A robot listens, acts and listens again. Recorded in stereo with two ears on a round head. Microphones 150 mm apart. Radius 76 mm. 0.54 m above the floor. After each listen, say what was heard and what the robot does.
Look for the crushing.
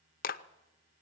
Keep listening.
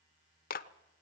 Keep listening.
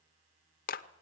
I can't make out crushing, only a clap.